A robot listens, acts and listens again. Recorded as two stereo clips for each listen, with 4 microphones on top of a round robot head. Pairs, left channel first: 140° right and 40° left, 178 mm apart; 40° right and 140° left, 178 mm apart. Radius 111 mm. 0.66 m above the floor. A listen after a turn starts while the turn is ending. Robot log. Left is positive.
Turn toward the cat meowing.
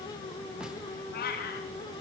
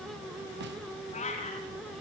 note: The cat meowing: 100° right.
cmd yaw -100
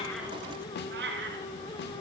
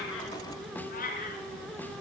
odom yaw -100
end: Facing the cat meowing, 2 to 4 m away.